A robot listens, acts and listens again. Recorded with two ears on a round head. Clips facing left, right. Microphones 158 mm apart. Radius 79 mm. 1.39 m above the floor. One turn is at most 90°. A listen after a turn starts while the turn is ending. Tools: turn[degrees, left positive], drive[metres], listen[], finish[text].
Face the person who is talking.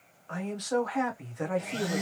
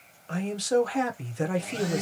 Thought: The man speaking: about 35° right or 145° right.
Action: turn[-35]
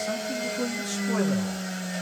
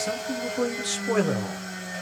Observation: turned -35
Thought: So it is at 105° right.
Action: turn[-90]
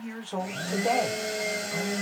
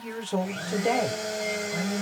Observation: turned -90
Thought: Nothing new. It was at 15° right.
Action: turn[-15]
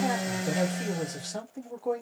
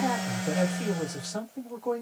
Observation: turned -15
Action: finish[Facing the man speaking.]